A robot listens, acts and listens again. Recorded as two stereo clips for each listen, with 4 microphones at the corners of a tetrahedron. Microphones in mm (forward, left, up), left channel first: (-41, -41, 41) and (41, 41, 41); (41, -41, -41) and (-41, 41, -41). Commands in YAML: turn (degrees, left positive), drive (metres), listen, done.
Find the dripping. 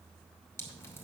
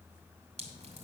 turn: 155
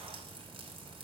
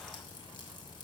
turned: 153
done: "Found it: dripping, straight ahead."